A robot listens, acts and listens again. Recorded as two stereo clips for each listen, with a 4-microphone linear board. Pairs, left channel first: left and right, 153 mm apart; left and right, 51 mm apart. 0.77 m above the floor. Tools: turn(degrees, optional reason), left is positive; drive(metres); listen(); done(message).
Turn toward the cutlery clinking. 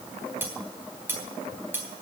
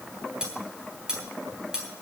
turn(degrees=-30)
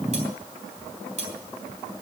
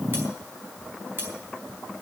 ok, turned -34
turn(degrees=-135, reason="So it is at 135° right.")
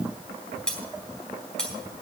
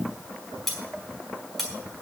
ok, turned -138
done("Facing the cutlery clinking, 2 to 4 m away.")